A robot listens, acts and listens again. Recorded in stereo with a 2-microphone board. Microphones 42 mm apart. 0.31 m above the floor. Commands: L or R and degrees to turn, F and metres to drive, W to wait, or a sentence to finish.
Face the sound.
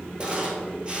R25
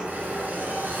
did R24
R135
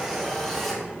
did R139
Found it: a camera shutter, straight ahead.